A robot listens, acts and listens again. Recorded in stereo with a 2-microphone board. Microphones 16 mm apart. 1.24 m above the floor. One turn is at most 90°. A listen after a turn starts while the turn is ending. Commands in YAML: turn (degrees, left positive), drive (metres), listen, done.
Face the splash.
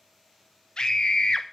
listen: true
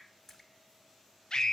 turn: 25
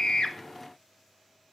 listen: true
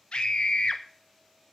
done: "I heard a splash, but can't make it out now. It was about straight ahead or 130° left."